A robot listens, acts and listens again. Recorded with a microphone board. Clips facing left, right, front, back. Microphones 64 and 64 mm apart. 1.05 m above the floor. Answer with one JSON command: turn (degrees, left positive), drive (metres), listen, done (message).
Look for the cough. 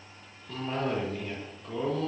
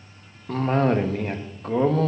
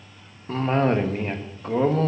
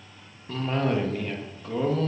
{"turn": -55}
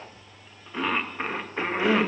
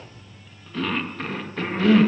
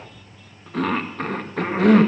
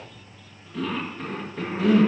{"turn": 20}
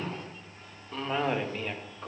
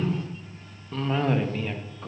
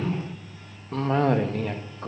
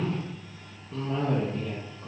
{"done": "Found it: a cough, straight ahead."}